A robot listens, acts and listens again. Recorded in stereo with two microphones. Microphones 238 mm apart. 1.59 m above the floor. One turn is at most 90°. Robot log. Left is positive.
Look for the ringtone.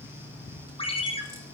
note: The ringtone: about 25° left or 155° left.
cmd yaw +25
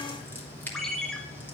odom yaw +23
end: Facing the ringtone.